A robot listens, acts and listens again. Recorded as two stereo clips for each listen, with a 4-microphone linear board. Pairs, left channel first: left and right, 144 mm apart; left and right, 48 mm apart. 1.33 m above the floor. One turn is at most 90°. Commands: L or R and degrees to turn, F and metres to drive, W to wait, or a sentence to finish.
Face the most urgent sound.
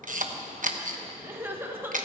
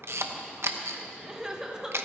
R15
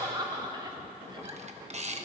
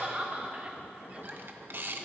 R90
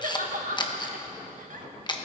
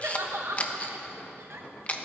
R70
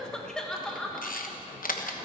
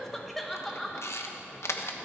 Found it: crying, straight ahead.